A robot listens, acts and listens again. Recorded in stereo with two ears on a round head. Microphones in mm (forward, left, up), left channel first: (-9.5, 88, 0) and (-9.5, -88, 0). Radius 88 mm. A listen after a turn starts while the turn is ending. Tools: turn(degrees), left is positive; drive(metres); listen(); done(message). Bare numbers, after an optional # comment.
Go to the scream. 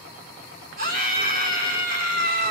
# The scream: about 45° right or 135° right.
turn(-45)
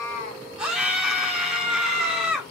drive(1.0)
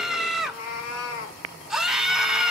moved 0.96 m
drive(1.0)
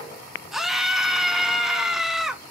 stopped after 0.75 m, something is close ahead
done("I am next to the scream.")